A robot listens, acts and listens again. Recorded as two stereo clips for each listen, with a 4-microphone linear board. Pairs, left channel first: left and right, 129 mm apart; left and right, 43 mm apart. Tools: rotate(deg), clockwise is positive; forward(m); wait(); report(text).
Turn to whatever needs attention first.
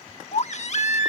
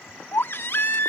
rotate(-60)
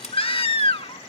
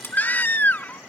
rotate(-50)
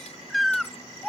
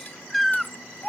report("Facing the baby crying.")